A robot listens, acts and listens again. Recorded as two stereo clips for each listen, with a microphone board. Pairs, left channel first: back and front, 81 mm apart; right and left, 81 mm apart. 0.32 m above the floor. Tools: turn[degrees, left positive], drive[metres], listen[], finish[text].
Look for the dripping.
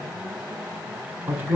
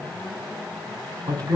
Action: listen[]
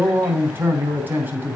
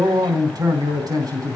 Action: listen[]
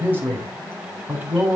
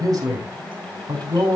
Action: finish[I can't make out dripping, only a man speaking.]